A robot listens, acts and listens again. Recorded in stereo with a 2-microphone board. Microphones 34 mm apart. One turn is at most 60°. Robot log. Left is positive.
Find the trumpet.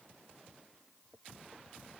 cmd idle
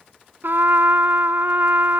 note: The trumpet: about 65° right or 115° right.
cmd yaw -60
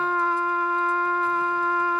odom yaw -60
note: So it is at 10° right.
cmd yaw -10
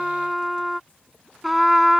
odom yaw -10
end: Found it: a trumpet, straight ahead.